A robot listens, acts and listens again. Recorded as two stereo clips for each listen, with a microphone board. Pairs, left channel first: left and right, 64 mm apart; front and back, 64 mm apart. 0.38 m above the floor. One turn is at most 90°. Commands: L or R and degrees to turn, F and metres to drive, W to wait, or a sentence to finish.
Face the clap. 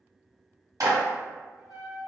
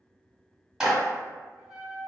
R90
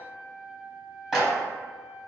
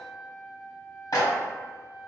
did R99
Found it: a clap, straight ahead.